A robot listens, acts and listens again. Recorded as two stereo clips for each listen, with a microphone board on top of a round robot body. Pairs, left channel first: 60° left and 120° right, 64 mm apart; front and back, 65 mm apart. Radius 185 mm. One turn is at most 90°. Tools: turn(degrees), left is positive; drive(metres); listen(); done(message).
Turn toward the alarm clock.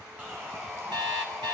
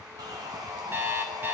turn(degrees=-90)
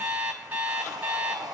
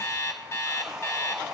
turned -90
turn(degrees=-45)
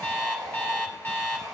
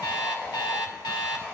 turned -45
done("Found it: an alarm clock, straight ahead, under 1 m away.")